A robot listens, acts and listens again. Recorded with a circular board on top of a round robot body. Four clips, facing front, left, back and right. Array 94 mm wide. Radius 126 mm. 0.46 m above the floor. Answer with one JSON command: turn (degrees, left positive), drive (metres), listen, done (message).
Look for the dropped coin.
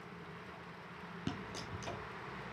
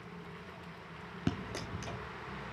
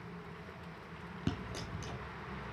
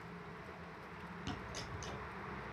{"turn": 95}
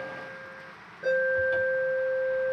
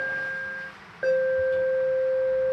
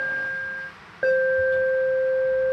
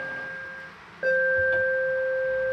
{"done": "I heard a dropped coin from this way, but can't make it out now."}